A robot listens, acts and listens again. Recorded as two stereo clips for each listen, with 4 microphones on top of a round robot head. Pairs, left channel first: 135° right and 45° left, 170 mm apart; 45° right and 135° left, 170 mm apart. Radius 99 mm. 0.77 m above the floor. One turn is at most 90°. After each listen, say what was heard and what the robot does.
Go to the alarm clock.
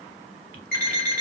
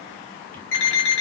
The alarm clock: 50° right. Turn 50° right.
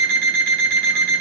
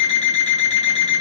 Drive 1.0 m forward.
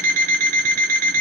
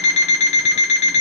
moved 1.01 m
Drive 1.0 m forward.
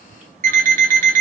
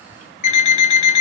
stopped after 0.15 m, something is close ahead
I am next to the alarm clock.